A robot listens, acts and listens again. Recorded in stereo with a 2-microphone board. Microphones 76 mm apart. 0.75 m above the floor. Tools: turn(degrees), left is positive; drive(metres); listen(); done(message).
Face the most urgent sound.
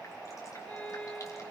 listen()
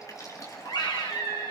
turn(degrees=90)
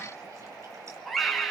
done("Found it: a scream, straight ahead, over 4 m away.")